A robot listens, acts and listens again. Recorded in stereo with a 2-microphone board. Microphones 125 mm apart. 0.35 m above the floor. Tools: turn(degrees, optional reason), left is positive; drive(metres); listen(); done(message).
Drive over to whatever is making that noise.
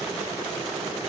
listen()
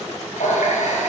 turn(degrees=90)
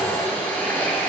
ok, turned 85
turn(degrees=10, reason="So it is at 10° left.")
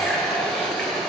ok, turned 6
drive(metres=1.0)
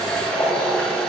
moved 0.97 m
drive(metres=1.0)
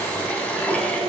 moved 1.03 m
turn(degrees=10, reason="The running tap is now 10° left.")
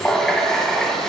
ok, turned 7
drive(metres=1.0)
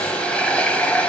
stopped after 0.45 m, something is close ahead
turn(degrees=10, reason="The running tap is now 10° left.")
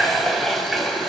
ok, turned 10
done("Arrived at the running tap, straight ahead.")